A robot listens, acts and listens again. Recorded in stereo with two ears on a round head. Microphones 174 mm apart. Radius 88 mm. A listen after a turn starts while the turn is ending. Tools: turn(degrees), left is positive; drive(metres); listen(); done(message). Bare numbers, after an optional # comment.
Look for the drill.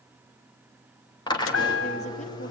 # The drill: about 25° left or 155° left.
turn(25)
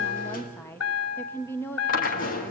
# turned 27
# So it is at 130° left.
turn(130)
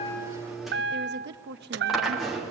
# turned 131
done("Facing the drill.")